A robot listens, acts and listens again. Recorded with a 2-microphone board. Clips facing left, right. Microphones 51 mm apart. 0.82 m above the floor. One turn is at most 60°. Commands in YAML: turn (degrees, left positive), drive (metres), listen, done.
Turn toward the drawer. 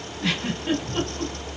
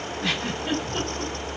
listen: true
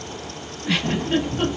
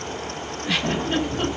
turn: -55
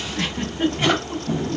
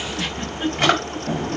turn: -60
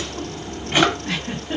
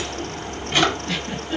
turn: 15
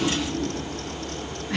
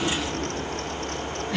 done: "Found it: a drawer, straight ahead."